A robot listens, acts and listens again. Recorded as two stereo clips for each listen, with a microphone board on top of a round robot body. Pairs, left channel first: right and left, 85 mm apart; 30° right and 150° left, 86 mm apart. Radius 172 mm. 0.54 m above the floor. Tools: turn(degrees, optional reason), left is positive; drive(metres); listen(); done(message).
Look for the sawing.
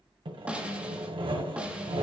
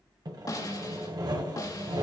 turn(degrees=110, reason="The sawing: 110° left.")
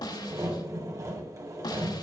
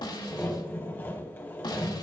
turn(degrees=35, reason="The sawing is now 35° left.")
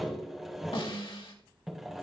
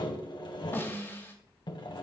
done("Facing the sawing, 1 to 2 m away.")